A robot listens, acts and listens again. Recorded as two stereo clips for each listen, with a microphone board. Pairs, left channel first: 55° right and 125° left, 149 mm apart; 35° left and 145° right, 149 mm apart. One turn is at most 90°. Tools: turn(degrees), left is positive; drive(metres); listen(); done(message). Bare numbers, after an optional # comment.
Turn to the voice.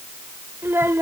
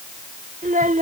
# The child speaking: 160° right.
turn(-90)
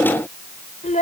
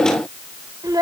# The child speaking is now 85° right.
turn(-85)
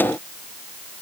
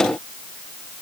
listen()
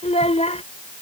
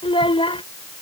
# The child speaking is now 15° right.
turn(-15)
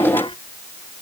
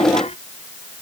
listen()
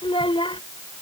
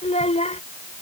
done("Found it: a child speaking, straight ahead.")